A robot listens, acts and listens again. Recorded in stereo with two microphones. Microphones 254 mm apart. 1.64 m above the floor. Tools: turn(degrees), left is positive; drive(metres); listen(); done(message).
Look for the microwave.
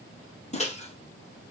turn(degrees=25)
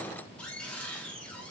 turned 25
listen()
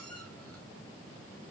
listen()
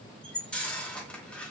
done("Found it: a microwave, straight ahead.")